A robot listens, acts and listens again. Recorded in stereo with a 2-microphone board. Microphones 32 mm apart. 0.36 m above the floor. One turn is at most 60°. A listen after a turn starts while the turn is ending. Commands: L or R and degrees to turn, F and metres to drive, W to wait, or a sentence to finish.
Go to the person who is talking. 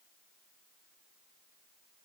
W
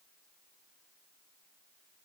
W
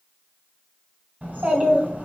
R50
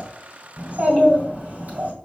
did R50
R60
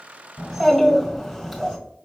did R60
R10
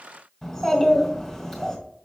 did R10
F1.0
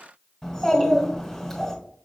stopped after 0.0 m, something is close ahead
Something is in my way. I am facing the child speaking but have not reached it.